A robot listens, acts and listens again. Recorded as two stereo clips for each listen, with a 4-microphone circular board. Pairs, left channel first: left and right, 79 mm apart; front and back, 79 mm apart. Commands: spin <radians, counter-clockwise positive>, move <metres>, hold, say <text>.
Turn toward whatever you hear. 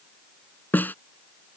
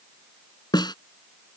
spin 0.44
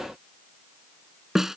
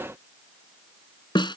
say Found it: a snare drum, straight ahead.